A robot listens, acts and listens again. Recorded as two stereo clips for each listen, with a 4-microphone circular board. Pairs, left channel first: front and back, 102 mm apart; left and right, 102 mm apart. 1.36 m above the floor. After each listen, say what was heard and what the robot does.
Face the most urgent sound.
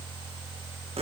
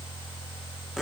Keep listening.
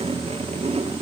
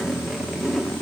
Keep listening.
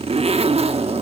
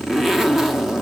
I can't make out anything urgent, only a zipper.